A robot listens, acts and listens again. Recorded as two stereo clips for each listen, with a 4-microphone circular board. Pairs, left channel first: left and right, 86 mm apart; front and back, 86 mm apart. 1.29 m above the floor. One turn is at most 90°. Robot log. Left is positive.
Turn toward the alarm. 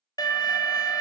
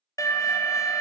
note: The alarm: 50° left.
cmd yaw +50
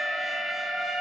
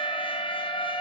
end: Facing the alarm, 1 to 2 m away.